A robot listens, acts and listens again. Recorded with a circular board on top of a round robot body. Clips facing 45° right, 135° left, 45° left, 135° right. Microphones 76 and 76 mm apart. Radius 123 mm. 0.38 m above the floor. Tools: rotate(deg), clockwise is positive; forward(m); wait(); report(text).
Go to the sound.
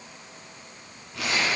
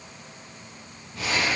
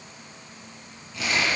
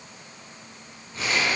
rotate(75)
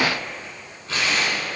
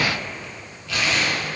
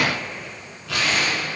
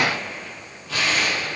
rotate(-15)
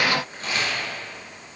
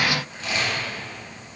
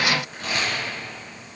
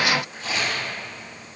forward(1.0)
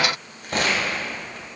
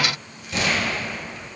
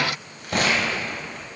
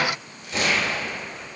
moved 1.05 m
forward(1.0)
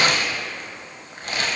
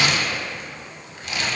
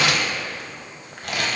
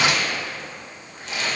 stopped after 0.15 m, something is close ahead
rotate(-10)
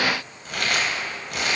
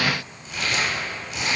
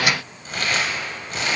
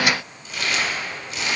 report("I am next to the crumpling.")